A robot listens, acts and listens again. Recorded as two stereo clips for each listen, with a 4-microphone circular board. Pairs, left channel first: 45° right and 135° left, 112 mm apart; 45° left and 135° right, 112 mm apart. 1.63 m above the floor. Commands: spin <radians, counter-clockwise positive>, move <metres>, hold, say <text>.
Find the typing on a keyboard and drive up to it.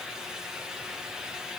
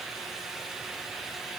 hold
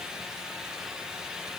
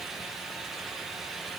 hold
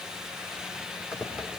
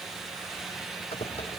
spin 0.96
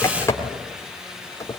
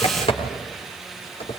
spin 0.35
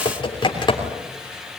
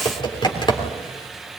move 1.0
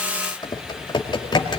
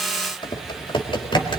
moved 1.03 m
move 1.0
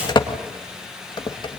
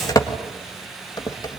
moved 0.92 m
move 1.0
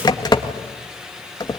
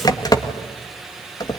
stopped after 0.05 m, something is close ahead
say I am next to the typing on a keyboard.